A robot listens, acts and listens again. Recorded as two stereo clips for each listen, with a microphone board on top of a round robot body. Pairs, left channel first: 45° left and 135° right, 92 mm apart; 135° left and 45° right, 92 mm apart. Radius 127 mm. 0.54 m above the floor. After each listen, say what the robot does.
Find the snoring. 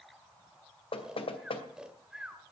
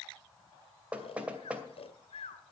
Turn 140° left.
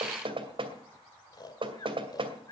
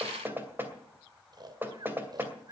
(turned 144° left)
Facing the snoring.